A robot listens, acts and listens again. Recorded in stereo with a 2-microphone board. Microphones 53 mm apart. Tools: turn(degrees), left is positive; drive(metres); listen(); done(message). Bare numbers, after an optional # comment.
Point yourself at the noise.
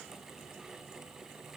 listen()
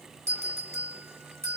# The bell: about 65° right or 115° right.
turn(-65)
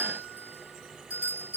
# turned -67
# So it is at 35° right.
turn(-35)
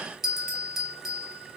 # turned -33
done("Found it: a bell, straight ahead.")